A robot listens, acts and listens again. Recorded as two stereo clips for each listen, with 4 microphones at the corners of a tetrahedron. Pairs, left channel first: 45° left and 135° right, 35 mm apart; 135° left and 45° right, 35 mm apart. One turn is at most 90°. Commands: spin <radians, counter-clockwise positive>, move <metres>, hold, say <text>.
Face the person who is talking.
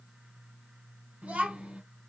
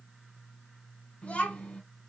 spin 1.57
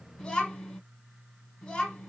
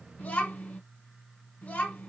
spin 1.57
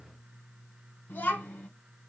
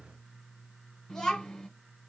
spin 1.05
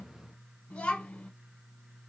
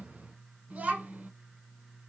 spin -0.17
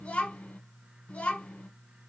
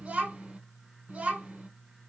say Found it: a child speaking, straight ahead.